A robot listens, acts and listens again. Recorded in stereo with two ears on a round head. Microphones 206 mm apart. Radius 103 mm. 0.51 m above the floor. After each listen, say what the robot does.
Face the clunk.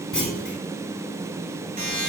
Turn 30° left.
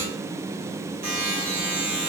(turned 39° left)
Keep listening.
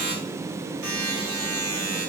I heard a clunk, but can't make it out now. It was about 35° right or 140° left.